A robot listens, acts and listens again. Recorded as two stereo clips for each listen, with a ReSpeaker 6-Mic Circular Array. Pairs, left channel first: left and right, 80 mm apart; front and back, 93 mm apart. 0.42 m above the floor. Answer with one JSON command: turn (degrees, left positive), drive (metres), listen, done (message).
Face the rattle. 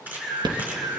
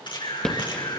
{"turn": -80}
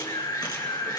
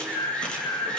{"listen": true}
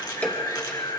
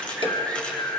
{"turn": 20}
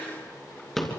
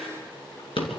{"done": "Found it: a rattle, straight ahead, 2 to 4 m away."}